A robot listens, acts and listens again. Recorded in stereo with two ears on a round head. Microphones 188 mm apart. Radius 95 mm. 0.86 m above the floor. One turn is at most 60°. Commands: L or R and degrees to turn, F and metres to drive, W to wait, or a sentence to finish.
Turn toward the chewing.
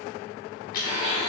L40
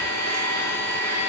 W
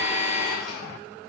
W
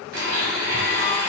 I heard chewing, but can't make it out now. It was about straight ahead or 100° left.